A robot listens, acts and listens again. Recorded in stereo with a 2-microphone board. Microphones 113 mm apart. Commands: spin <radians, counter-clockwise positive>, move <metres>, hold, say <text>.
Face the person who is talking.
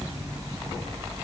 hold
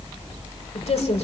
spin 1.22
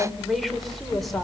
say Facing the woman speaking, over 4 m away.